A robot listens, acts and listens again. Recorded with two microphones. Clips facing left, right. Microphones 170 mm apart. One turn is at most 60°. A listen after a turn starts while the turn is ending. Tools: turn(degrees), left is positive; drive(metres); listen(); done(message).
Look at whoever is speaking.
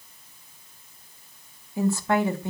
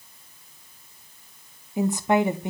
turn(degrees=-20)
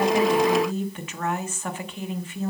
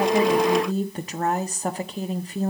turn(degrees=-60)
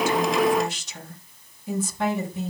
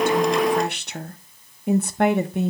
turn(degrees=-60)
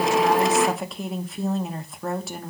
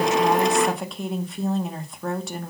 done("Found it: a woman speaking, straight ahead, 1 to 2 m away.")